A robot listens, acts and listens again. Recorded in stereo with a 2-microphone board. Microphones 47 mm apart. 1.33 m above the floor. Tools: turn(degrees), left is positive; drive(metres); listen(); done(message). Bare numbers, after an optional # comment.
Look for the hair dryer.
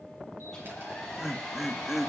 turn(30)
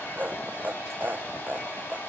# So it is at 140° left.
turn(140)
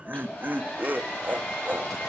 # The hair dryer is now 40° left.
turn(40)
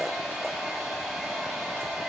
done("Facing the hair dryer, over 4 m away.")